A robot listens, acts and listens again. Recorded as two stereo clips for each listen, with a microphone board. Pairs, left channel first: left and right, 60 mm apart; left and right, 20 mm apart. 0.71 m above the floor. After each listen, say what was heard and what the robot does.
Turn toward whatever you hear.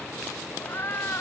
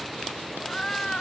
The cat meowing: about 40° left or 140° left. Turn 40° left.
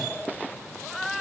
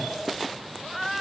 Facing the cat meowing.